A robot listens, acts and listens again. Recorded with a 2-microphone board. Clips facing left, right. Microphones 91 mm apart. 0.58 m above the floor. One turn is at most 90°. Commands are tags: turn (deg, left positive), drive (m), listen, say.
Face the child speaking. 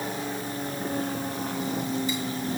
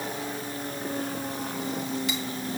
<listen/>
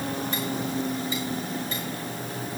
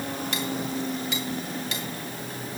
<listen/>
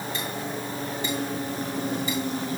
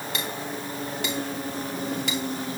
<say>I can't make out a child speaking, only cutlery clinking.</say>